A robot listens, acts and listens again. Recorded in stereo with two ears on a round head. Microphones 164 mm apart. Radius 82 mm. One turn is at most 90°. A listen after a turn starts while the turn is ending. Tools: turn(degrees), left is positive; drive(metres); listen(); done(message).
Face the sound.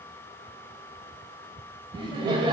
turn(degrees=-30)
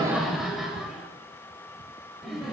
done("Facing the laughter, 1 to 2 m away.")